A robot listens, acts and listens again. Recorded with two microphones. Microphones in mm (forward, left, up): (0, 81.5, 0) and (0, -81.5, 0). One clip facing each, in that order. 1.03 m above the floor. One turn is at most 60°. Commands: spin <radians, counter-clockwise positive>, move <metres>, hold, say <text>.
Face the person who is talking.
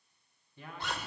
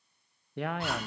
spin -1.05
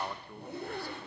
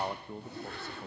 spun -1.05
spin -0.44
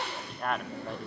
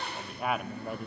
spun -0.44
say Found it: a man speaking, straight ahead, under 1 m away.